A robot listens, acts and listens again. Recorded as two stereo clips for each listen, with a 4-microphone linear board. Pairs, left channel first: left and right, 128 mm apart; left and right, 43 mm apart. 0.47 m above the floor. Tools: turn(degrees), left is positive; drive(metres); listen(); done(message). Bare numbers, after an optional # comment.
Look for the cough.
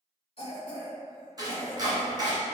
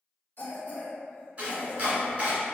# The cough: about 50° left or 130° left.
turn(50)
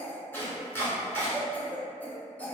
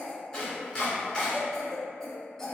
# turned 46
# So it is at 15° left.
turn(15)
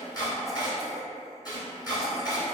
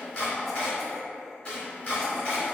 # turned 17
listen()
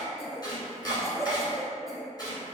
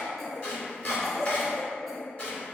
done("Facing the cough, 1 to 2 m away.")